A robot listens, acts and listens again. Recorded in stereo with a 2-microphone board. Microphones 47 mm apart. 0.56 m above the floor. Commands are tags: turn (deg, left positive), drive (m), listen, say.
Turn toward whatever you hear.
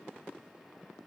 <listen/>
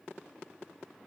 <listen/>
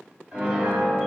<turn deg="-30"/>
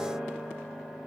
<turn deg="15"/>
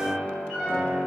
<say>Facing the piano, 1 to 2 m away.</say>